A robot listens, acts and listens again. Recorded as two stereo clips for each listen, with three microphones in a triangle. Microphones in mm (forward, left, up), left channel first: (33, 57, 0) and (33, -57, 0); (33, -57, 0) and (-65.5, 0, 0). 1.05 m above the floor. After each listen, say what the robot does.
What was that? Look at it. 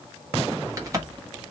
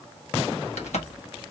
Turn 25° right.
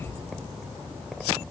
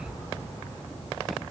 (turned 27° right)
I heard a crack from this way, but can't make it out now.